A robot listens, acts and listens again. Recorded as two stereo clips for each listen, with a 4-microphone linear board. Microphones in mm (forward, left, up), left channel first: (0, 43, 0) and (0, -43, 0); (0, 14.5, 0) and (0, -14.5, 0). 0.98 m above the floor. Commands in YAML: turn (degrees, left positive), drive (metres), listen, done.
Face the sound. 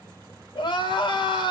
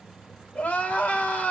turn: 65
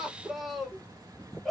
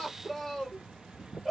done: "Facing the crying."